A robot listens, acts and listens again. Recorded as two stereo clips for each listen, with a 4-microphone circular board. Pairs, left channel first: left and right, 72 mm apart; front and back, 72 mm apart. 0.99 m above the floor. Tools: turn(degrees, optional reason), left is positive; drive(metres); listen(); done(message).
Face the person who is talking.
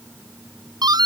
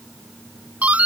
listen()
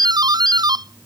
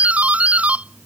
listen()
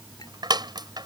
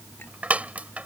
done("I can't make out anyone speaking to turn to.")